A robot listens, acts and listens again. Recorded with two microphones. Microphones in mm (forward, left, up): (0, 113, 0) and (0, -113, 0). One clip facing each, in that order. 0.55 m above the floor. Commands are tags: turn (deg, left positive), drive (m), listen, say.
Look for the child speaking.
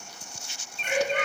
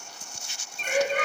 <turn deg="55"/>
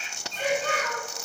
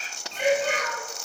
<turn deg="10"/>
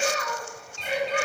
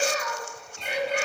<say>Found it: a child speaking, straight ahead.</say>